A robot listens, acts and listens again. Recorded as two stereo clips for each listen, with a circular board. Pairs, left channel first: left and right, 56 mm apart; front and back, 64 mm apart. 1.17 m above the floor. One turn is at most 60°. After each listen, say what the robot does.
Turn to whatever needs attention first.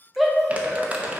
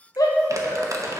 Facing the shout.